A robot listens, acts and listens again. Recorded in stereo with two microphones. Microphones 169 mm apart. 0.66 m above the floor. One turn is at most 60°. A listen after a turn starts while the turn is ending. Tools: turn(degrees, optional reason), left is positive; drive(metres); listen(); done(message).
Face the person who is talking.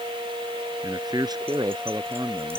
turn(degrees=-25, reason="The man speaking: about 25° right or 155° right.")
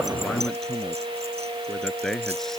done("Found it: a man speaking, straight ahead.")